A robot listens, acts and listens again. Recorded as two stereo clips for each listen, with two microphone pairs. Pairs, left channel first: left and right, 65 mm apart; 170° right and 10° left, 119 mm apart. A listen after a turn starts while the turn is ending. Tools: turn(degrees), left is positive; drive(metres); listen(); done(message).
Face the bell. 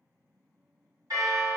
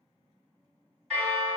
turn(degrees=-85)
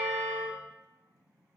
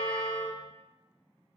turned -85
listen()
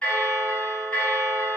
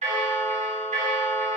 turn(degrees=15)
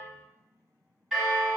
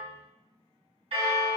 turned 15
done("Facing the bell.")